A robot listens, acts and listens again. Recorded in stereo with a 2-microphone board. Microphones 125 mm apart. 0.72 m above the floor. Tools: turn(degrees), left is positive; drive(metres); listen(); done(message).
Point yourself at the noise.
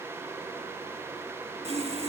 turn(degrees=-55)
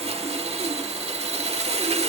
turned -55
turn(degrees=-60)
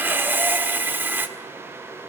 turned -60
turn(degrees=-15)
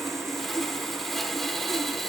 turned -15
done("Facing the sawing.")